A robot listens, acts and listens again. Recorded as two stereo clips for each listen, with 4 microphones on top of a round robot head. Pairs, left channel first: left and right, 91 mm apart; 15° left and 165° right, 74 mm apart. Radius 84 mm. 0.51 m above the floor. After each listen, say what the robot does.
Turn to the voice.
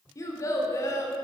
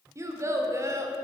Turn 145° left.
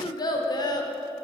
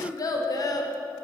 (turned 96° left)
Turn 50° left.
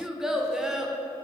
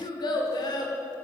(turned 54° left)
Facing the child speaking, under 1 m away.